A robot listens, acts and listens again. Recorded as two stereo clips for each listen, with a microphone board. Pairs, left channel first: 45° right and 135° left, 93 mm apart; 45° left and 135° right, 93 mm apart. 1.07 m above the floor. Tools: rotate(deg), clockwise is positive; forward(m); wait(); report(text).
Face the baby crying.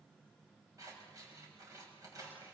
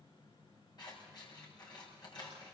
wait()
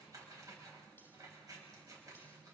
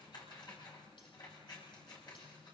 wait()
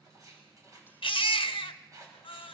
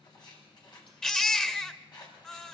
rotate(35)
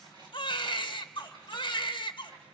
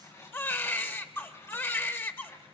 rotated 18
rotate(20)
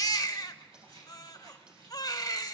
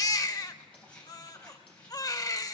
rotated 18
report("Facing the baby crying, under 1 m away.")